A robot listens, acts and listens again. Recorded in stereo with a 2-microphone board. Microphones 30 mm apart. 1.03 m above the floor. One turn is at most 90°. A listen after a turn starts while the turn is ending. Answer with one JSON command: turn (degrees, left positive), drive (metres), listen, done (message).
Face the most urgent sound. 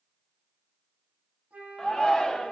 {"turn": 20}
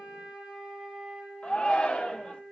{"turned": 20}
{"turn": 90}
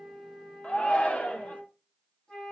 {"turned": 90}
{"turn": 60}
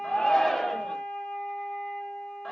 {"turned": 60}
{"turn": 15}
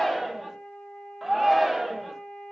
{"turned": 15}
{"done": "Found it: a shout, straight ahead, under 1 m away."}